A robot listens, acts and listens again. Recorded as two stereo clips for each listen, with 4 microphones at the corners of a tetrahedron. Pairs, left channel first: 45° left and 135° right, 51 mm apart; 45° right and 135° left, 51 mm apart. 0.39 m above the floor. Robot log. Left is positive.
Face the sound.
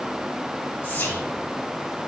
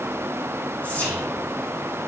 end: Facing the whispering.